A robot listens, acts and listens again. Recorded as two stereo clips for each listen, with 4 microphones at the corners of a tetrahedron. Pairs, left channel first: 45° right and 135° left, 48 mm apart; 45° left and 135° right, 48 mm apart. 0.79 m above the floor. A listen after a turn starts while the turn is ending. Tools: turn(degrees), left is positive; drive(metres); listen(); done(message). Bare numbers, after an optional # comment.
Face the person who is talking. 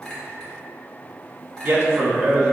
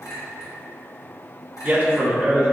# The man speaking: 165° left.
turn(165)
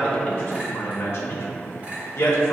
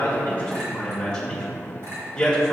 # The man speaking is now 30° right.
turn(-30)
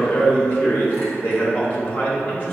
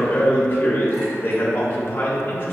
done("Facing the man speaking.")